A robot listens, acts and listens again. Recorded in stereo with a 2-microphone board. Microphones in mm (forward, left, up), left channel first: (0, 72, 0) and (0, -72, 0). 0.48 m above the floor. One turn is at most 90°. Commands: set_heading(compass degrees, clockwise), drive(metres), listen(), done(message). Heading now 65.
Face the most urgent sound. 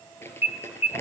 set_heading(20)
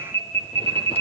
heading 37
set_heading(22)
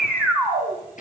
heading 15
done("Facing the alarm, over 4 m away.")